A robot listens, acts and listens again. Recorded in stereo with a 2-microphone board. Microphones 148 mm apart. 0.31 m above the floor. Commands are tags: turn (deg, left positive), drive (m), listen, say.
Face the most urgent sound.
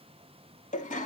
<listen/>
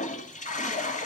<listen/>
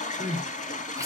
<turn deg="-20"/>
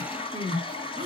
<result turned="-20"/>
<turn deg="-135"/>
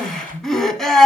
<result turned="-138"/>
<say>Facing the crying.</say>